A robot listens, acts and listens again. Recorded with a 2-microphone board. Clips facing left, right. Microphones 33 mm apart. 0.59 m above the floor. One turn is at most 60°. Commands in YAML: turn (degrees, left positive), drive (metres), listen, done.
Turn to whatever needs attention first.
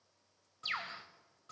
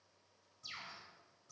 listen: true
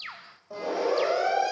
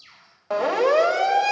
turn: -60
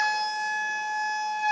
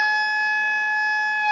turn: -35
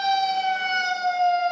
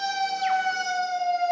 turn: 40
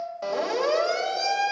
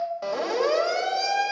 done: "Found it: a siren, straight ahead."